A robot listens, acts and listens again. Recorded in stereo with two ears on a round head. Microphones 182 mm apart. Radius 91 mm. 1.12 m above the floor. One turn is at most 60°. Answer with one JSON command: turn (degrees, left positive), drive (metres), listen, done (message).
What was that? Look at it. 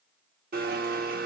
{"turn": -50}
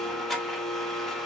{"done": "Facing the blender."}